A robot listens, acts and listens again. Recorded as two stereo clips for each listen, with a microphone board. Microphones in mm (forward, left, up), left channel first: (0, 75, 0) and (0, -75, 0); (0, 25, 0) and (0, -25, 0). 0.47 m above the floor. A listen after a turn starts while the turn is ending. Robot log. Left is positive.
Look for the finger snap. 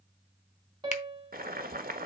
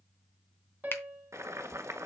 note: The finger snap: about 50° left or 130° left.
cmd yaw +50
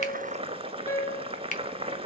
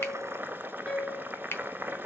note: So it is at 65° left.
cmd yaw +65
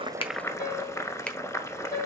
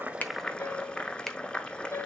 cmd idle
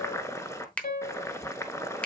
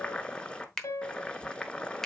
note: The finger snap is now 10° left.
cmd yaw +10
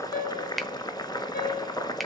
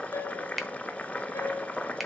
end: Found it: a finger snap, straight ahead.